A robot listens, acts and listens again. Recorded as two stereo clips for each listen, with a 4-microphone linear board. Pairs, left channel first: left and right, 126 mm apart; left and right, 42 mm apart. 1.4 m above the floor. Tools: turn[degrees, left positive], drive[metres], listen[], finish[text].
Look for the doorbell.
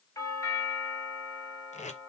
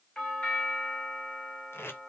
Thought: The doorbell: about 25° left or 155° left.
Action: turn[25]
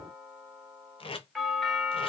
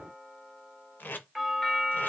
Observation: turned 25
Action: finish[Facing the doorbell, 1 to 2 m away.]